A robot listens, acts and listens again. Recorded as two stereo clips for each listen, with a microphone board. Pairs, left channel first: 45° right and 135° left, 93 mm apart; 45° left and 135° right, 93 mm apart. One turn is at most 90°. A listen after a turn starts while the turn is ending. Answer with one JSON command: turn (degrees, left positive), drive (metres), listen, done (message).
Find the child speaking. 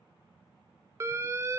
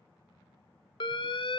{"listen": true}
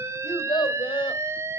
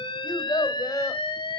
{"turn": -10}
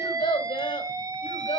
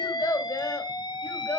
{"turn": -25}
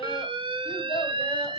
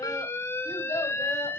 {"turn": -10}
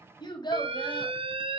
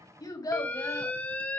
{"done": "Found it: a child speaking, straight ahead, 2 to 4 m away."}